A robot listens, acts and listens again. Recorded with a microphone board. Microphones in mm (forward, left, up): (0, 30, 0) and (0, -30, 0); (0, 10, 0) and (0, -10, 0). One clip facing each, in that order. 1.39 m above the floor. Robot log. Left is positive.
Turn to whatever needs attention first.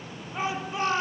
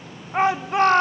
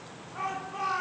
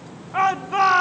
note: The shout: about 65° right or 115° right.
cmd yaw -65
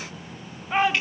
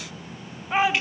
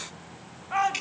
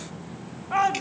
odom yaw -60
end: Facing the shout.